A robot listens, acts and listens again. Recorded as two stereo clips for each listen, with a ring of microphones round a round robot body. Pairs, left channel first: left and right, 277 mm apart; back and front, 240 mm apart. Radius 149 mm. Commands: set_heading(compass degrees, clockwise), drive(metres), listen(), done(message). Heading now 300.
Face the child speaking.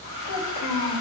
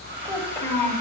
set_heading(200)
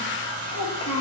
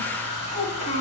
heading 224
set_heading(204)
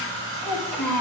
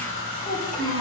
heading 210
done("Found it: a child speaking, straight ahead, over 4 m away.")